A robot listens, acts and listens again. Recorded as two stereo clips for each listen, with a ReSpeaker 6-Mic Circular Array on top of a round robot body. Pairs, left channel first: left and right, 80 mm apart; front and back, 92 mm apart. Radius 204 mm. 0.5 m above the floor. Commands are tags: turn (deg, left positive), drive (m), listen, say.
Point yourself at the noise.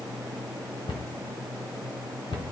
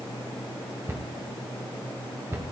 <turn deg="115"/>
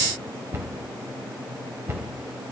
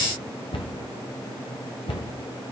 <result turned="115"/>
<turn deg="-30"/>
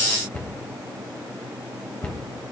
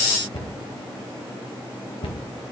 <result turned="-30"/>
<turn deg="20"/>
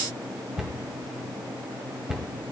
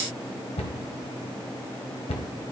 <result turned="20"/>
<say>Found it: a cupboard door, straight ahead.</say>